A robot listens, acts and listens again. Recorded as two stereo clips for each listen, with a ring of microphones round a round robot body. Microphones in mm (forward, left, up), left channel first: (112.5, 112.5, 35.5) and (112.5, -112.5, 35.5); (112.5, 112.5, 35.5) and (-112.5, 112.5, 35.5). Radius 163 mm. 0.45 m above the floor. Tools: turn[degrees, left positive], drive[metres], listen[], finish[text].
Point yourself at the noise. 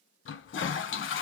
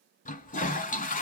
Thought: The toilet flushing: 55° left.
Action: turn[55]
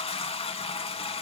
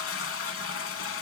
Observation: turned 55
Thought: The toilet flushing is now 25° left.
Action: turn[25]
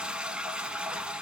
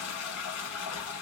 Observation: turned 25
Action: finish[Found it: a toilet flushing, straight ahead, under 1 m away.]